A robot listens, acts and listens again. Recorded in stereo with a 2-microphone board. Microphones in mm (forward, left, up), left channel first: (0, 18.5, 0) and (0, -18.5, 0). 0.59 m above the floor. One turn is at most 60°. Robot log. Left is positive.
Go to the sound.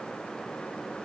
cmd idle
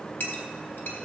cmd yaw +60
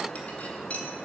note: So it is at 40° left.
cmd yaw +40
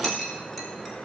cmd fwd 1.0
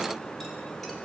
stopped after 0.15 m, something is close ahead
cmd idle
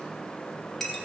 end: Blocked. The clink is further on, straight ahead.